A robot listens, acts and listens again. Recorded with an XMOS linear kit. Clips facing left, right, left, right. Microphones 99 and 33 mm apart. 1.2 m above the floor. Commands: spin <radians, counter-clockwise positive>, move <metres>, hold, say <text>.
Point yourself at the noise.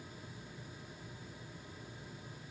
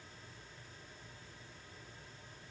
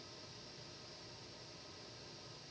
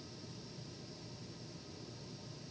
hold
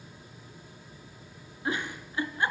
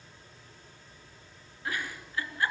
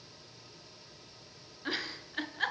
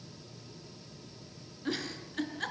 spin 0.35
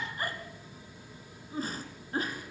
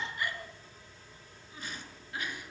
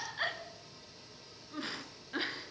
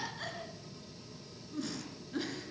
spin 2.36
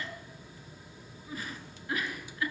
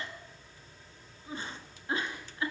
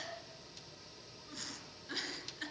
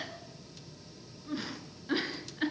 spin -0.52
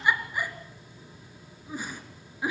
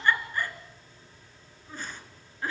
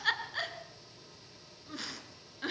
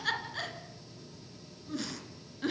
spin 0.17
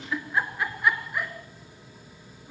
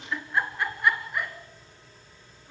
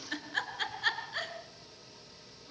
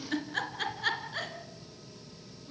say Facing the giggle, 2 to 4 m away.